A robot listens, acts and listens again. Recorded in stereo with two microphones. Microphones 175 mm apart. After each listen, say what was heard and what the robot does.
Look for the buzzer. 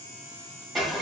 Keep listening.
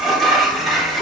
Keep listening.
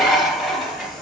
I can't make out a buzzer to turn to.